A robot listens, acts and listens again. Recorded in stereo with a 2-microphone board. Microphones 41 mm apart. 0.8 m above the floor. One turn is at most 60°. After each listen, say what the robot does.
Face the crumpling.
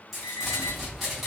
Turn 30° left.
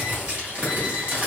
Turn 30° right.
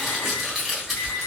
Found it: crumpling, straight ahead, 1 to 2 m away.